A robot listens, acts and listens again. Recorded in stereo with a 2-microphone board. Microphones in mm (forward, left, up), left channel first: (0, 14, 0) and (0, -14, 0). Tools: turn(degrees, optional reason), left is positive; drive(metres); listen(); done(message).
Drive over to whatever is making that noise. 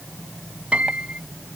turn(degrees=-50, reason="The piano: about 50° right or 130° right.")
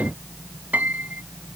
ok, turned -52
turn(degrees=-75, reason="So it is at 75° right.")
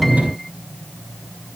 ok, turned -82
listen()
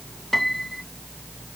drive(metres=1.0)
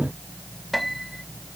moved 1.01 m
drive(metres=1.0)
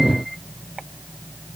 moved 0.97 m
listen()
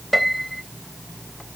drive(metres=1.0)
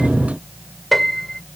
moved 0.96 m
drive(metres=1.0)
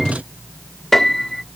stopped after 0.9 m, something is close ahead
turn(degrees=10, reason="The piano is now 10° left.")
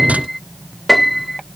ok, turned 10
done("Arrived at the piano, straight ahead.")